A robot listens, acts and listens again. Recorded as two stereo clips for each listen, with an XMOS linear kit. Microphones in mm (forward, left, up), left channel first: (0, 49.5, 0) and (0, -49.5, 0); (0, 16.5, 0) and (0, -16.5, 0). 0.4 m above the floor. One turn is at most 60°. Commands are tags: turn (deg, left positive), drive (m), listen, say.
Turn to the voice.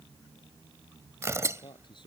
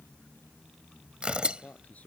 <turn deg="50"/>
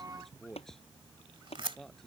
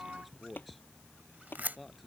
<say>Found it: a man speaking, straight ahead.</say>